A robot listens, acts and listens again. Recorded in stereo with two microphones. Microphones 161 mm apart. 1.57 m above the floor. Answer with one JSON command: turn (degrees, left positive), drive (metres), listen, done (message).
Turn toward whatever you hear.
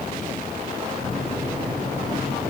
{"turn": -50}
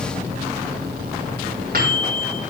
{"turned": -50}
{"turn": -80}
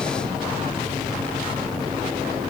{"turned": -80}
{"done": "Found it: a microwave, straight ahead, over 4 m away."}